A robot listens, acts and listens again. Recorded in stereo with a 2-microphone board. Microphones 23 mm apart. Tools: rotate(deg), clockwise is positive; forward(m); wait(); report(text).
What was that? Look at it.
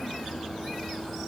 wait()
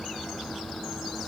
wait()
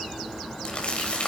rotate(-45)
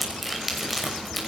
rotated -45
report("Facing the crumpling, over 4 m away.")